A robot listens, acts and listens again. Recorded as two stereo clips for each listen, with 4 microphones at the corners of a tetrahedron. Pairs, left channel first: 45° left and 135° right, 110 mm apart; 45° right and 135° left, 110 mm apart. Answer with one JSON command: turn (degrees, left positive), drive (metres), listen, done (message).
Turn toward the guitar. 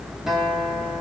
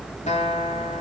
{"turn": -50}
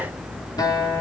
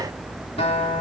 {"turn": -15}
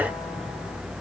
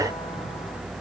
{"listen": true}
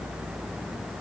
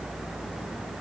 {"listen": true}
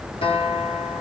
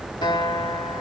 {"done": "Facing the guitar, 2 to 4 m away."}